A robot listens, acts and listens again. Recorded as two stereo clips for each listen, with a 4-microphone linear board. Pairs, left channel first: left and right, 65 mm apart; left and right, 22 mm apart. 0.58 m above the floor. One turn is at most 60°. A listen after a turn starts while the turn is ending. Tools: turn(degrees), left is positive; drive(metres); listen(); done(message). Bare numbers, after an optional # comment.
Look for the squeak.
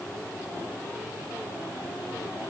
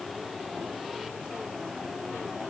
listen()
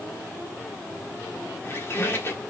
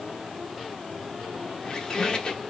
# The squeak: about 40° left or 140° left.
turn(40)
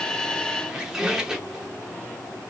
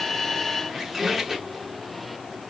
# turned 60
# So it is at 10° right.
turn(-10)
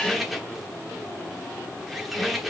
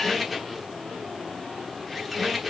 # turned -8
done("Facing the squeak, 1 to 2 m away.")